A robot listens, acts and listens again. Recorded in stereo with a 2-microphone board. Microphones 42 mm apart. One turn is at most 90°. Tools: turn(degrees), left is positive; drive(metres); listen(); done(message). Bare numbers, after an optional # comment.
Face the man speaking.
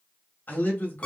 # The man speaking: about 50° left or 130° left.
turn(50)
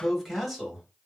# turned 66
done("Facing the man speaking, 1 to 2 m away.")